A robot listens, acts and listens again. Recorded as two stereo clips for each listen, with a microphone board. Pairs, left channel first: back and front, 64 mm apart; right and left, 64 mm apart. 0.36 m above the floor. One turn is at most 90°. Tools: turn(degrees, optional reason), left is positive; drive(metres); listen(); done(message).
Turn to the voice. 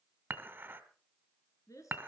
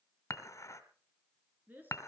turn(degrees=90, reason="The woman speaking: 150° left.")
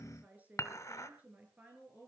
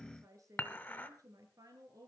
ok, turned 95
turn(degrees=65, reason="The woman speaking is now 65° left.")
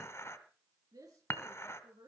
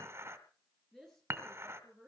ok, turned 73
done("Found it: a woman speaking, straight ahead.")